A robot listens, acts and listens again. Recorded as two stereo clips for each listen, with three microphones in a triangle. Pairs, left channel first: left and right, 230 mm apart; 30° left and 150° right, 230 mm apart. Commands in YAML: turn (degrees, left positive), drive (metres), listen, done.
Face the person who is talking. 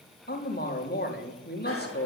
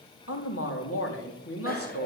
turn: 45
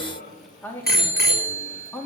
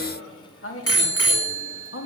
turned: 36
turn: 10
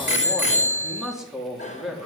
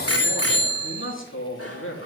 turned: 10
done: "Found it: a man speaking, straight ahead, 2 to 4 m away."